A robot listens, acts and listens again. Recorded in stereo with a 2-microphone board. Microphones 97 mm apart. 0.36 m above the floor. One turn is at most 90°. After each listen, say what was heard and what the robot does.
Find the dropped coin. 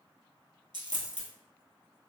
The dropped coin: about 60° right or 120° right. Turn 60° right.
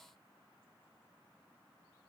Keep listening.
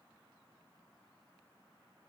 I heard a dropped coin, but can't make it out now. It was about straight ahead or 60° right.